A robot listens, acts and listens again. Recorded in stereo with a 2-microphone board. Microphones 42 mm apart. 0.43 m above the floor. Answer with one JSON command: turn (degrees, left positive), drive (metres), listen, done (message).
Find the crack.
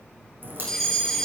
{"turn": -55}
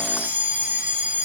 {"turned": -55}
{"listen": true}
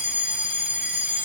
{"done": "I heard a crack, but can't make it out now. It was about straight ahead or 70° right."}